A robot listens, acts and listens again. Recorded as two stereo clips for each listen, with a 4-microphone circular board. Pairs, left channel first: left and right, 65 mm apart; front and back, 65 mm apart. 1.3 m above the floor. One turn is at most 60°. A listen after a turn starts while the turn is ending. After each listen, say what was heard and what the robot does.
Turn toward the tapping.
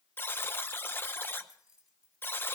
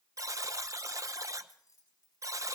Keep listening.
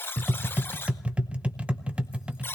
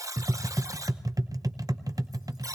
The tapping: 160° right. Turn 60° right.
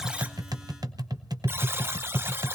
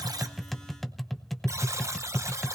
The tapping is now 90° right. Turn 60° right.
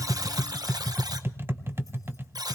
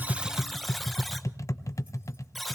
The tapping is now 35° right. Turn 35° right.
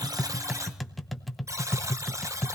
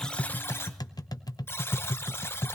Facing the tapping, under 1 m away.